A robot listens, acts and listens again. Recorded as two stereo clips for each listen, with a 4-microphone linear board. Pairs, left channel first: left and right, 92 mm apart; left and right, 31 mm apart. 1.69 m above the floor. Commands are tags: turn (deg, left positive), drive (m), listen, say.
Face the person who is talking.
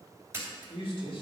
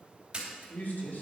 <turn deg="75"/>
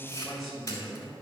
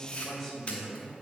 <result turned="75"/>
<say>Facing the man speaking, 2 to 4 m away.</say>